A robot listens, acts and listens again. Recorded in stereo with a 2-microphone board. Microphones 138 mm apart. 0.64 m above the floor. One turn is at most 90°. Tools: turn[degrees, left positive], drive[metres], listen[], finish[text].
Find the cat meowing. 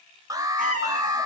Action: turn[-90]
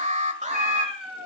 Action: finish[Facing the cat meowing.]